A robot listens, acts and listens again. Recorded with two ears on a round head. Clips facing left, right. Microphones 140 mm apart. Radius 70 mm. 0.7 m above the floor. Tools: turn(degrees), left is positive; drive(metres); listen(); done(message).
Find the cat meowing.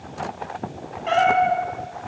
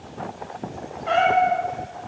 turn(degrees=30)
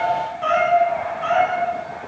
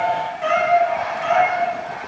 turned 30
turn(degrees=-20)
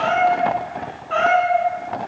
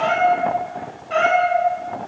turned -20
turn(degrees=-20)
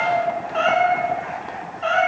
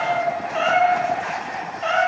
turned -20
done("Facing the cat meowing.")